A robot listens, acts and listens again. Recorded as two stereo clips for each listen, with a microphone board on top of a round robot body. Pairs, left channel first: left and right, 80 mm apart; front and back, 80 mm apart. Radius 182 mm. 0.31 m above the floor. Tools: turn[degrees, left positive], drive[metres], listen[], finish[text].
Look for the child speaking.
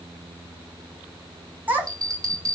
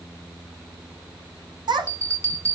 Thought: The child speaking: 155° right.
Action: turn[-155]
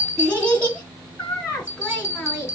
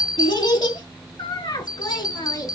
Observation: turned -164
Thought: The child speaking is now 25° left.
Action: turn[25]
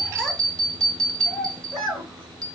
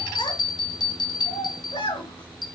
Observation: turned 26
Action: finish[Facing the child speaking, over 4 m away.]